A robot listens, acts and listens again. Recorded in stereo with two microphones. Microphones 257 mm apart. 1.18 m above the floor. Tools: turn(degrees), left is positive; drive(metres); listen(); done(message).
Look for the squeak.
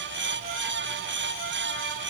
listen()
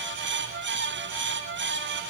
listen()
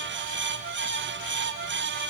done("I can't make out a squeak to turn to.")